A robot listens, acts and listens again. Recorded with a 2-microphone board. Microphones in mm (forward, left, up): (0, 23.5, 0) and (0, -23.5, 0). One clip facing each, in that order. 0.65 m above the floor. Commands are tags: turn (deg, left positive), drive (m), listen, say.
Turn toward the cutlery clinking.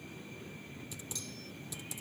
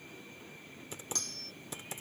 <turn deg="-75"/>
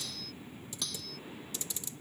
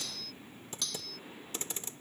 <say>Found it: cutlery clinking, straight ahead.</say>